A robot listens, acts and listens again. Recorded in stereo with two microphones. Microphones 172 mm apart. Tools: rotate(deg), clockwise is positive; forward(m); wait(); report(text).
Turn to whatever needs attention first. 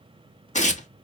wait()
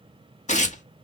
wait()
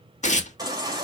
rotate(25)
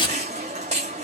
rotate(135)
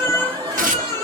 rotate(35)
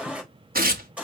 rotate(10)
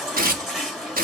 report("Found it: a baby crying, straight ahead.")